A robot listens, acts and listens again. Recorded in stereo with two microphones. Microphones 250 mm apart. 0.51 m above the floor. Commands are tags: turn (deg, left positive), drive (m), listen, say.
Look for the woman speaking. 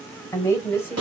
<turn deg="30"/>
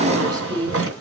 <turn deg="-20"/>
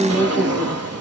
<say>Found it: a woman speaking, straight ahead.</say>